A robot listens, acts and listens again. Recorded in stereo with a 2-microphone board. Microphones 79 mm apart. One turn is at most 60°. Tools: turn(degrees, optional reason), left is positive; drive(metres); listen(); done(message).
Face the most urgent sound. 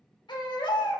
turn(degrees=60, reason="The baby crying: about 75° left or 105° left.")
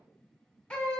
turn(degrees=15, reason="So it is at 15° left.")
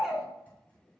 done("Facing the baby crying.")